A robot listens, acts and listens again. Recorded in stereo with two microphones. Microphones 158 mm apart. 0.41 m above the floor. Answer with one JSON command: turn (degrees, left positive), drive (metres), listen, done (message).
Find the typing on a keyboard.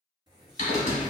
{"turn": 50}
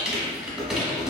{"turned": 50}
{"done": "Found it: typing on a keyboard, straight ahead."}